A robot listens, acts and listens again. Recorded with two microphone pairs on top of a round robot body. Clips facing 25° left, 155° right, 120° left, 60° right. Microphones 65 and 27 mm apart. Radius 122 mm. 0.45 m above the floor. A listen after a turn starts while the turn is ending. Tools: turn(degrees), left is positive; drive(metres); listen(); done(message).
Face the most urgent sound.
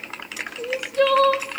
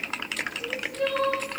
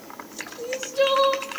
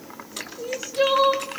turn(degrees=25)
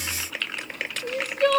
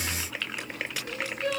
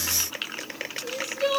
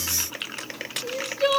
turn(degrees=10)
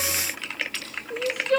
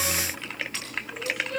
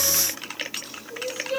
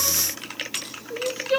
done("Found it: crying, straight ahead, 2 to 4 m away.")